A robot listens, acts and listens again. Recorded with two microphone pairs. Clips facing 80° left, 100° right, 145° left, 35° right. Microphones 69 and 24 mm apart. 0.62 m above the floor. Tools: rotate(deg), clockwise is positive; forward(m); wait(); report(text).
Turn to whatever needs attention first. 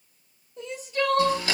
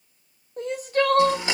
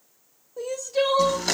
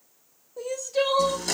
rotate(130)
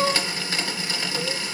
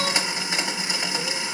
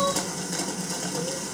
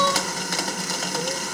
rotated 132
report("Facing the crying, under 1 m away.")